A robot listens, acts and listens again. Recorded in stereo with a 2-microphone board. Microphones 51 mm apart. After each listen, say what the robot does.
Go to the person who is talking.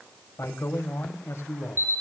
Turn 60° left.
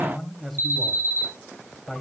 Drive 1.0 m forward.
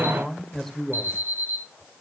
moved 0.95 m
Drive 1.0 m forward.
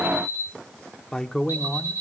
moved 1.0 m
Turn 10° left.
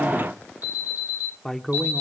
Drive 1.0 m forward.
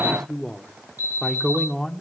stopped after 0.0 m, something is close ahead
Turn 10° left.
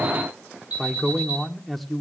Arrived at the man speaking, straight ahead.